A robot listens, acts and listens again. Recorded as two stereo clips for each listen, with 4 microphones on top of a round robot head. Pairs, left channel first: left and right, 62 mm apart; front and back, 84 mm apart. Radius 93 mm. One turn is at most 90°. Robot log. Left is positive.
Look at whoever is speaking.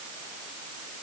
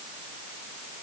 cmd idle
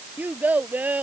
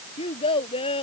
note: The child speaking: 25° right.
cmd yaw -25
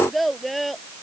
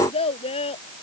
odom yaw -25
end: Facing the child speaking.